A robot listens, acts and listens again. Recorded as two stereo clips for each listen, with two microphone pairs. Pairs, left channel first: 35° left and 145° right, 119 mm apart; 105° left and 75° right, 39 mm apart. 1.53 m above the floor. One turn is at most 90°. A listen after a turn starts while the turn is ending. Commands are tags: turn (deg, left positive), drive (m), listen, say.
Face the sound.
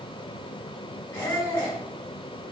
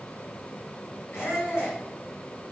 <turn deg="90"/>
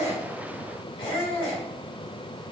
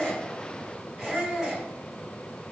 <say>Found it: a squeak, straight ahead, 1 to 2 m away.</say>